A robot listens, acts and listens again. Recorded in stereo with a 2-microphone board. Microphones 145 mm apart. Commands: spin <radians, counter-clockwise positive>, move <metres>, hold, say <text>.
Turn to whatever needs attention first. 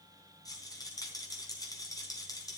hold
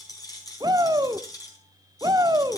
spin -0.52
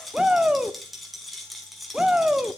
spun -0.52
spin -0.17
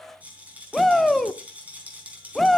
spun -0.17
say Facing the shout.